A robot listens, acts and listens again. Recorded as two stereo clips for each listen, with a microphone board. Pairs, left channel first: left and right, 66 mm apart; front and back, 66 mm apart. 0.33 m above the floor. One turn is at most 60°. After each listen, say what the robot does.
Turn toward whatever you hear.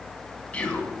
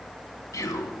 Turn 25° left.
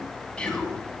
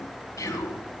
Turn 20° left.
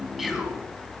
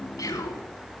Found it: whispering, straight ahead, 2 to 4 m away.